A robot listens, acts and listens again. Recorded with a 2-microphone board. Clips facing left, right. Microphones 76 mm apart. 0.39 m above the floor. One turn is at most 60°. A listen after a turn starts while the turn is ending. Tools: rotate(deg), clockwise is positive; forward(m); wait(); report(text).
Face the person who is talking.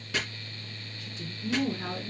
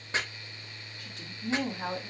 rotate(60)
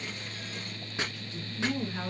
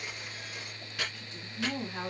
rotate(25)
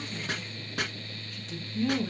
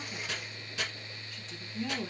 report("Found it: a woman speaking, straight ahead.")